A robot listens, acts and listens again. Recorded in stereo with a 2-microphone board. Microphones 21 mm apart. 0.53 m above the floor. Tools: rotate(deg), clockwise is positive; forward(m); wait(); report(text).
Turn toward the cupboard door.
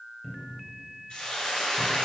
rotate(-25)
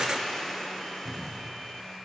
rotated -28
rotate(-130)
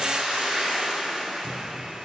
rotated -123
wait()
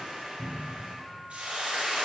report("Found it: a cupboard door, straight ahead.")